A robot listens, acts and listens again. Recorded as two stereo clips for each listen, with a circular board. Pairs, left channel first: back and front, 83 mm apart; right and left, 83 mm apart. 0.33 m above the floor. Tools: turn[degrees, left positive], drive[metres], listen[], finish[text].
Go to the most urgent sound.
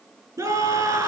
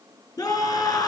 Thought: The scream: 50° right.
Action: turn[-50]
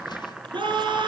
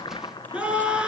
Thought: The scream is now 15° left.
Action: turn[15]
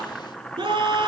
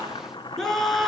Action: drive[1.0]
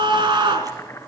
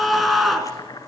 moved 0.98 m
Action: drive[1.0]
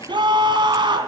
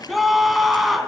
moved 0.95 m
Action: drive[1.0]
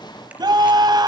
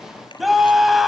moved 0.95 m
Action: drive[1.0]
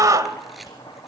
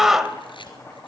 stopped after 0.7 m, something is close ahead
Action: finish[I am next to the scream.]